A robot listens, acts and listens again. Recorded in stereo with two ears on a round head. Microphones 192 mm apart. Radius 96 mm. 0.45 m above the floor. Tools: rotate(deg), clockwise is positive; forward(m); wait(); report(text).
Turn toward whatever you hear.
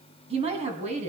rotate(30)
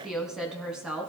report("Facing the woman speaking.")